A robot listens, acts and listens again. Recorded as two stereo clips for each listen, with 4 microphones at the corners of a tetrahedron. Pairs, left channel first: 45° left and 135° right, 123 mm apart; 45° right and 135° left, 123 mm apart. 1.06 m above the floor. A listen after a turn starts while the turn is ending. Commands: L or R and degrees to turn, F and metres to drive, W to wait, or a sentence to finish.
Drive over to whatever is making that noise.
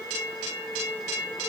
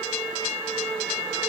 W
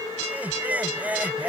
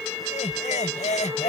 R55
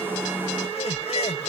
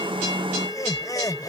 L15
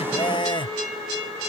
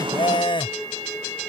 F1.0
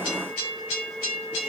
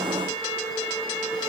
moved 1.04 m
W
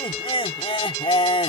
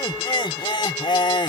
F1.0
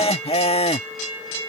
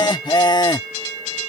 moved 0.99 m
L10
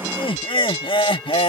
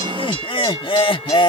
F1.0
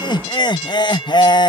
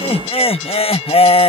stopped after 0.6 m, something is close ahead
I am next to the laughter.